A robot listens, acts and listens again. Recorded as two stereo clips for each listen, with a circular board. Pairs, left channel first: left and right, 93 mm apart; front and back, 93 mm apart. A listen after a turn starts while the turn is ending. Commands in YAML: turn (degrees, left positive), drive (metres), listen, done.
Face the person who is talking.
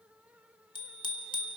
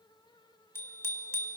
listen: true
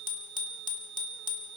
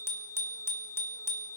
listen: true
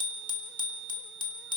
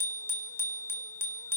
done: "I can't make out anyone speaking to turn to."